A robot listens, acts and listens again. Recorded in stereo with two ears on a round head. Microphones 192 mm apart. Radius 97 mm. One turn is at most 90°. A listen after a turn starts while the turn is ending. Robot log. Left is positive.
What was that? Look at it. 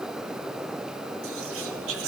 note: The whispering: about 70° right or 110° right.
cmd yaw -70
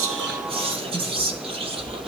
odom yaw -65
note: So it is at 30° right.
cmd yaw -30
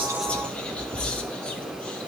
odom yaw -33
end: Found it: whispering, straight ahead.